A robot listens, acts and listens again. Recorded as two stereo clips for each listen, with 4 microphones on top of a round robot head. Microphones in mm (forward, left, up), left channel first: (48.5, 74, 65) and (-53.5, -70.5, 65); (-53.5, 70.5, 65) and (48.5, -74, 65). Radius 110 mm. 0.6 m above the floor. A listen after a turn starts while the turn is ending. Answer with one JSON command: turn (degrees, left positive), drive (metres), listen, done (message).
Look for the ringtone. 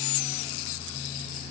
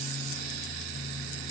{"listen": true}
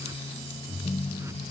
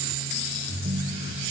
{"turn": -10}
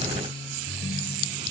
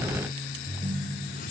{"done": "Found it: a ringtone, straight ahead."}